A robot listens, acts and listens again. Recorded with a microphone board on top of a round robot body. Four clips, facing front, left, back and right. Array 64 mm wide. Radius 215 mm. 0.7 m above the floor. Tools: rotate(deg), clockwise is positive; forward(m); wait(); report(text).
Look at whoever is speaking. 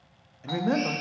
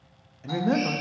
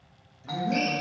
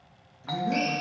rotate(-45)
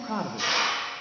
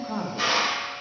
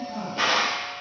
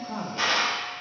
report("Found it: a man speaking, straight ahead.")